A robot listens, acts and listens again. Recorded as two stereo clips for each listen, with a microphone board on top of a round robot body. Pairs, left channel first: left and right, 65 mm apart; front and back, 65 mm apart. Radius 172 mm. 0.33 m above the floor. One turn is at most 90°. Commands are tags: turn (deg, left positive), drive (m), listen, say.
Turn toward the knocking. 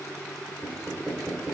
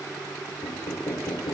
<turn deg="-10"/>
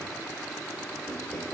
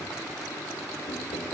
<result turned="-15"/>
<listen/>
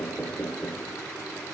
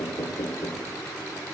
<say>Facing the knocking.</say>